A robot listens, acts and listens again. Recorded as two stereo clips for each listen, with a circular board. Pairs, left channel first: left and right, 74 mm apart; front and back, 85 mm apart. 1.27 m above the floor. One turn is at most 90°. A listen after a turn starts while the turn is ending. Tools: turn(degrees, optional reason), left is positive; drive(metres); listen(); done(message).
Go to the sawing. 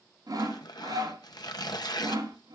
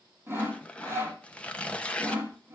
turn(degrees=-90, reason="The sawing: 120° right.")
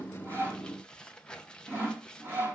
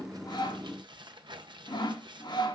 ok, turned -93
turn(degrees=-30, reason="The sawing is now 30° right.")
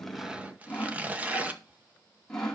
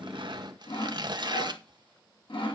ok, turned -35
drive(metres=1.0)
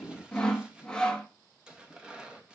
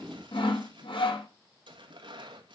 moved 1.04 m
turn(degrees=10, reason="The sawing is now 10° left.")
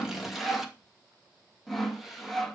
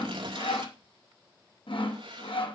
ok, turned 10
drive(metres=1.0)
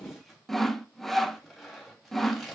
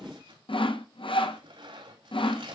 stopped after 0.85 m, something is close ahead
done("Arrived at the sawing, straight ahead.")